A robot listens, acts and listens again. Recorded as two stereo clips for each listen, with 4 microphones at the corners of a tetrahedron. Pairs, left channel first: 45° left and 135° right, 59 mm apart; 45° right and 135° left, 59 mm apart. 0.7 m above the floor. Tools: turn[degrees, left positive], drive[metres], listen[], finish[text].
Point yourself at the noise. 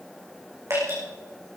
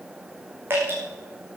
Thought: The dripping: 170° right.
Action: turn[-170]
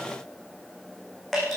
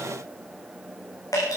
Thought: The dripping is now 40° right.
Action: turn[-40]
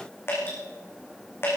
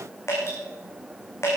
Action: finish[Facing the dripping, over 4 m away.]